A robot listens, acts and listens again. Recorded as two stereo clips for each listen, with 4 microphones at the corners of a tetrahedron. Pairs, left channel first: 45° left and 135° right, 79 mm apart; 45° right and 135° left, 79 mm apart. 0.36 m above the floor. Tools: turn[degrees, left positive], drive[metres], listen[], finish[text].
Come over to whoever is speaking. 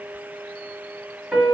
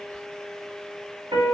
Action: listen[]
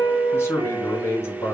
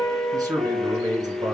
Thought: The man speaking: 100° left.
Action: turn[100]
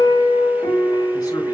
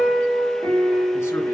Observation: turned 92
Thought: Nothing new. It was at 10° left.
Action: turn[10]
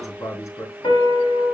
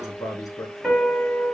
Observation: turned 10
Action: drive[1.0]
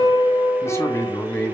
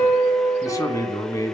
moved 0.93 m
Action: drive[1.0]
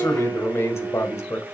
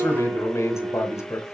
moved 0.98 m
Action: drive[1.0]
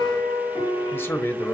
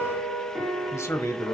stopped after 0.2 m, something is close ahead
Action: finish[I am next to the man speaking.]